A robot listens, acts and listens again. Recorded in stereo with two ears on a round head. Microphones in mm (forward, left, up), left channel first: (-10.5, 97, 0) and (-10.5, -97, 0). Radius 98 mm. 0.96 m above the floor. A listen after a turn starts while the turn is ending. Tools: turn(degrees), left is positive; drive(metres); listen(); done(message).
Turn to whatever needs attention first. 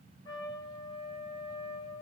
listen()
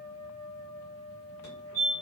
turn(degrees=75)
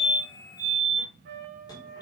turn(degrees=20)
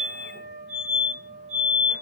done("Found it: a fire alarm, straight ahead, over 4 m away.")